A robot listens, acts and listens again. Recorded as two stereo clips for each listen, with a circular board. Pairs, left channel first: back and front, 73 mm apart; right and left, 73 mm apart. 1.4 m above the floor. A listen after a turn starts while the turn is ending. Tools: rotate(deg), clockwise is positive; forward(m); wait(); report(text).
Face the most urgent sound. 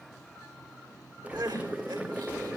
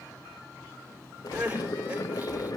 rotate(-20)
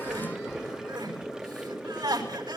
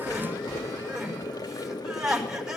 report("Found it: crying, straight ahead.")